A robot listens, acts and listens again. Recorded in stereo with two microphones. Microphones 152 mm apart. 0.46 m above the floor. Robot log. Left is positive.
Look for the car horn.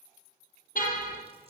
note: The car horn: about 65° left or 115° left.
cmd yaw +65
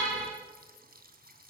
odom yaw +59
end: Found it: a car horn, straight ahead.